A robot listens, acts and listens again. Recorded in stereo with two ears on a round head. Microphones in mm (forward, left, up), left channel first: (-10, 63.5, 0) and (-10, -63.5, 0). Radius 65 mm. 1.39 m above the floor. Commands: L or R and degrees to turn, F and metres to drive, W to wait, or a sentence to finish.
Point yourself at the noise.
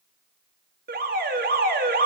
R70
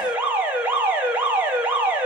R10
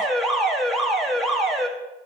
Facing the alarm.